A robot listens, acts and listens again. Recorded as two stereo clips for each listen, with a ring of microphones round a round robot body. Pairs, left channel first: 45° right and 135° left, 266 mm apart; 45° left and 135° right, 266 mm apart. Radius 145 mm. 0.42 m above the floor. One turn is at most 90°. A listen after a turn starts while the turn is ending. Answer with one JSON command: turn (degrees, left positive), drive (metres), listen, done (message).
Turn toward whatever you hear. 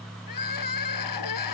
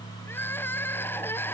{"turn": -40}
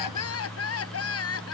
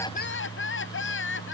{"done": "Found it: crying, straight ahead."}